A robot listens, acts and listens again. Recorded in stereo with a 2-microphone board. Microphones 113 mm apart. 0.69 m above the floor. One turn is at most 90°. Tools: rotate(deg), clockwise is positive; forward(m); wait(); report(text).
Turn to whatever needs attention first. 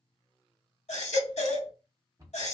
rotate(-90)
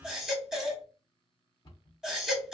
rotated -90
report("Facing the baby crying, 1 to 2 m away.")